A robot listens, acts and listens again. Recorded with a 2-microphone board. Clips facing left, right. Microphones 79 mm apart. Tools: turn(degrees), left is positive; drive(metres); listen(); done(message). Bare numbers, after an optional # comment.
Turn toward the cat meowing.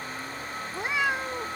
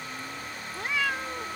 # The cat meowing: about 20° left or 160° left.
turn(20)
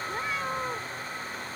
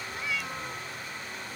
# The cat meowing: about 40° left or 140° left.
turn(40)
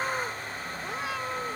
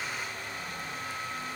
listen()
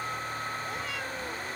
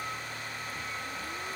listen()
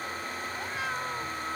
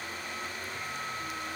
done("I heard a cat meowing, but can't make it out now. It was about straight ahead or 100° left.")